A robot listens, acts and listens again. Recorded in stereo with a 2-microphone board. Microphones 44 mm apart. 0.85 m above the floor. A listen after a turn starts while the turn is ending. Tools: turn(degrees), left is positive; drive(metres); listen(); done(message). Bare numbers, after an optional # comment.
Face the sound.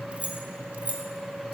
# The keys jangling: about 35° right or 145° right.
turn(-35)
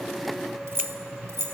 # So it is at 100° right.
turn(-100)
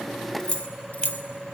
# The keys jangling is now 40° left.
turn(40)
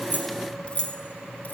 # The keys jangling is now 40° left.
turn(40)
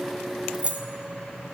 # The keys jangling is now 30° right.
turn(-30)
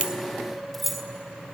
done("Found it: keys jangling, straight ahead, 1 to 2 m away.")